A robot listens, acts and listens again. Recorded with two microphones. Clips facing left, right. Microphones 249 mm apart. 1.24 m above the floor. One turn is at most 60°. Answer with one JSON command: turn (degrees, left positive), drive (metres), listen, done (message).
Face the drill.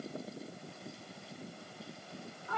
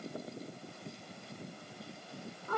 {"listen": true}
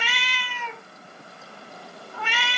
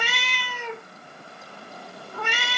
{"listen": true}
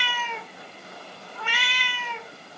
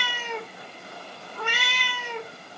{"done": "I can't make out a drill, only a cat meowing."}